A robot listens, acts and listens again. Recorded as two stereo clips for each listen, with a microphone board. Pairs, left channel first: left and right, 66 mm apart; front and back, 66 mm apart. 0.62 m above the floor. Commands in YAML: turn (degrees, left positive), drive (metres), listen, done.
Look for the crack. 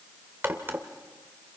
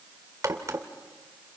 turn: -140
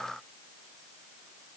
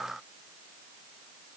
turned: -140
done: "I heard a crack from this way, but can't make it out now."